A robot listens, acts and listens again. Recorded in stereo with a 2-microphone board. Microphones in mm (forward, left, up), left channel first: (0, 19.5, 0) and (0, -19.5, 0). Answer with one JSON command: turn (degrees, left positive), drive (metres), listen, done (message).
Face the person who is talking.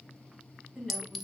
{"turn": -30}
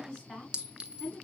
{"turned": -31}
{"turn": 15}
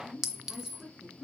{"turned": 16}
{"done": "Facing the woman speaking."}